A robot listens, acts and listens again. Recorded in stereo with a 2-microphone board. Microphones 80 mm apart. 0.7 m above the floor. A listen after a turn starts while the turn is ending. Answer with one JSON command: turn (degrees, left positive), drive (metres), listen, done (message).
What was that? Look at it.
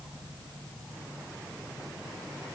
{"listen": true}
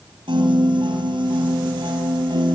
{"turn": -90}
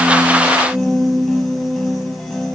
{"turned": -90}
{"done": "Facing the piano, over 4 m away."}